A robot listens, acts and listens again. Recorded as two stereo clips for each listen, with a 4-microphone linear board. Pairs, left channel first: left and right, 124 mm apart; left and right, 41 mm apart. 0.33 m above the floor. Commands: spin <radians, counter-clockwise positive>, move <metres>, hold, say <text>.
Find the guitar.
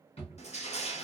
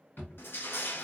hold
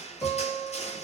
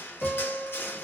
spin 0.52
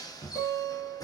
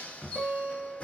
spin -0.52
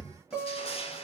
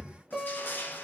spin -0.17
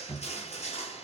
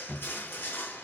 hold
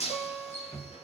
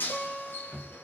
say Found it: a guitar, straight ahead.